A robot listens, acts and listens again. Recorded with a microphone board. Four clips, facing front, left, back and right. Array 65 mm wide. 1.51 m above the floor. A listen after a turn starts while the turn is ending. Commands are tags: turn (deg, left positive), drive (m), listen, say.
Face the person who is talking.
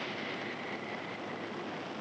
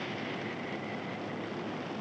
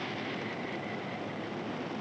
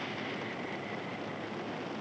<listen/>
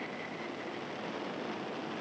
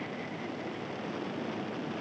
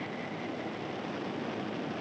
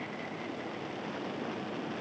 <listen/>
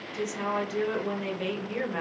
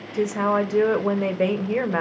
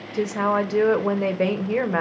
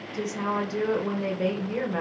<turn deg="140"/>
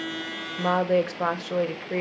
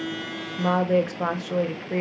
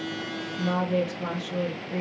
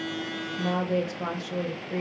<turn deg="35"/>
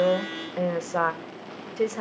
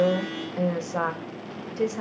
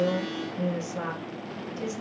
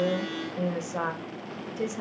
<turn deg="20"/>
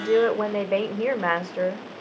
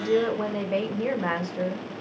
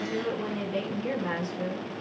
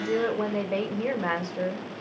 <say>Facing the woman speaking, 1 to 2 m away.</say>